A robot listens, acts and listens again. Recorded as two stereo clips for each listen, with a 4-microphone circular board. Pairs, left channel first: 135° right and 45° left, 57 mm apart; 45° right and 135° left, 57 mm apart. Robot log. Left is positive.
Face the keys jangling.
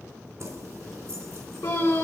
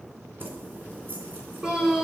note: The keys jangling: 80° left.
cmd yaw +80
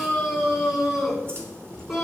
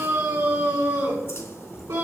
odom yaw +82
end: Found it: keys jangling, straight ahead.